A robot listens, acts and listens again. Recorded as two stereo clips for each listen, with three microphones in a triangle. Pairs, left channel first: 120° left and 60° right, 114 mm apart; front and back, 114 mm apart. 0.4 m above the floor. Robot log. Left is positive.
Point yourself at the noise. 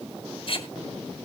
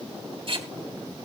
note: The tape being pulled: 155° left.
cmd yaw +155
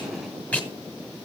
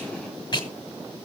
note: The tape being pulled is now 45° left.
cmd yaw +45
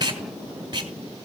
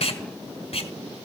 note: The tape being pulled is now 10° right.
cmd yaw -10
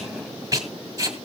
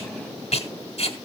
end: Found it: tape being pulled, straight ahead.